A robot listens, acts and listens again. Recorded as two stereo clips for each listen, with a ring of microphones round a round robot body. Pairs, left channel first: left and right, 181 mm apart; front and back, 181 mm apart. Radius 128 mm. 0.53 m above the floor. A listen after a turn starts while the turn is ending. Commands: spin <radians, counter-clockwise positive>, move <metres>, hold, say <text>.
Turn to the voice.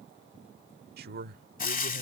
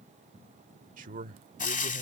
spin -2.27
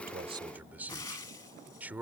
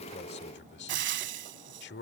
spin -0.17
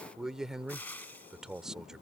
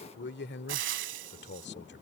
say Found it: a man speaking, straight ahead.